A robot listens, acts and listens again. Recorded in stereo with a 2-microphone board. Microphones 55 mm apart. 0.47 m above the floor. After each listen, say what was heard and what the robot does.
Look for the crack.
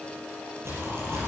The crack: about 55° right or 125° right. Turn 55° right.
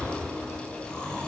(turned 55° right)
Keep listening.
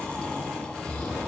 I heard a crack, but can't make it out now. It was about straight ahead or 70° right.